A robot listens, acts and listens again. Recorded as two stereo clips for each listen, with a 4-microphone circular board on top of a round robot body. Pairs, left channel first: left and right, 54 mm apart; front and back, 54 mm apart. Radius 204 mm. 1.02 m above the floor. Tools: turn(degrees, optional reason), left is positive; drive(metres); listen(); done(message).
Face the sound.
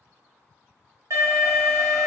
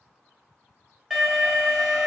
turn(degrees=-95, reason="The alarm: 95° right.")
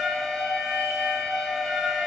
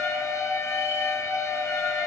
turn(degrees=-10, reason="The alarm is now 10° right.")
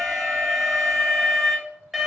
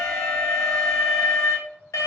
done("Found it: an alarm, straight ahead.")